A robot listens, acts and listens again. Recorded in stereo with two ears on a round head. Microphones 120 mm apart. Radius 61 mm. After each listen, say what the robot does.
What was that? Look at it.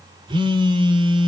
Turn 40° right.
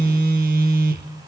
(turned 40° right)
Turn 100° right.
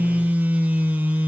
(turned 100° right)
Turn 10° right.
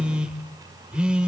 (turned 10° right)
Found it: a phone buzzing, straight ahead, 1 to 2 m away.